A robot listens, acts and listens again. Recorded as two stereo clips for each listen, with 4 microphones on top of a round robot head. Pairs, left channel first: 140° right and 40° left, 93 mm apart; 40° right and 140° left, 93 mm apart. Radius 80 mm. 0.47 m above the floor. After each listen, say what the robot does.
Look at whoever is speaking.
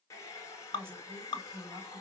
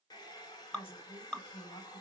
Turn 25° right.
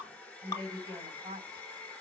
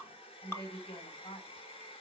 Turn 10° right.
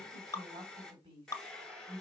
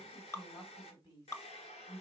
Found it: a woman speaking, straight ahead.